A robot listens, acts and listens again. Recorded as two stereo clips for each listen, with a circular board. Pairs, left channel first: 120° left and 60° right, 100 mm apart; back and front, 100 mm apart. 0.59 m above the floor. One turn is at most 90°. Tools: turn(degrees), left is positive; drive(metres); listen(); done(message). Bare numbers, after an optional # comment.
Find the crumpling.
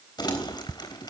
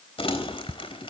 # The crumpling: 160° left.
turn(90)
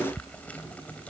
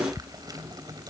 # The crumpling is now 45° left.
turn(45)
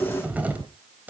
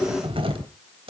# The crumpling is now 15° left.
turn(15)
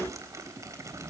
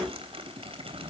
done("Facing the crumpling.")